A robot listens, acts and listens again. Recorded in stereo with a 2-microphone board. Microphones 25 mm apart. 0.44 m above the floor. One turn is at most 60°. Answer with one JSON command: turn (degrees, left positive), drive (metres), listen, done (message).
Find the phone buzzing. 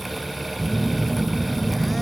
{"turn": 30}
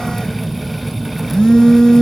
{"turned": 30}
{"turn": 60}
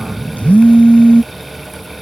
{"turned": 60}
{"turn": 60}
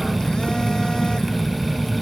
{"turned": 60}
{"turn": 40}
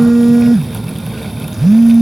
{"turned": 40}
{"done": "Facing the phone buzzing."}